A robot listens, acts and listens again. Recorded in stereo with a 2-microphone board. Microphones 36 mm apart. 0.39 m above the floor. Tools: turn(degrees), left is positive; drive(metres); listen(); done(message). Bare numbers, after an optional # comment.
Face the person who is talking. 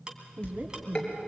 # The woman speaking: about 55° right or 125° right.
turn(-55)
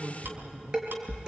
done("Found it: a woman speaking, straight ahead, 2 to 4 m away.")